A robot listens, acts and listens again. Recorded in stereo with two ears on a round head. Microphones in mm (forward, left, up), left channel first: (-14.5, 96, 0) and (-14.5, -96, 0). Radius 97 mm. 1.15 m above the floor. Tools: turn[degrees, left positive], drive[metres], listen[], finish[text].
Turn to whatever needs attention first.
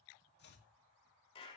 Action: listen[]
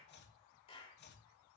Action: listen[]
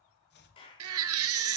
Action: turn[-90]
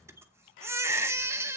Thought: So it is at 10° right.
Action: turn[-10]
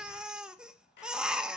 Action: finish[Facing the baby crying, under 1 m away.]